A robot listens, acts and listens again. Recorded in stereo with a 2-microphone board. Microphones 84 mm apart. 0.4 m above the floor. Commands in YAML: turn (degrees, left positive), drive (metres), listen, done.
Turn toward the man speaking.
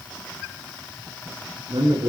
turn: -60
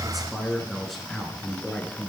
done: "Found it: a man speaking, straight ahead."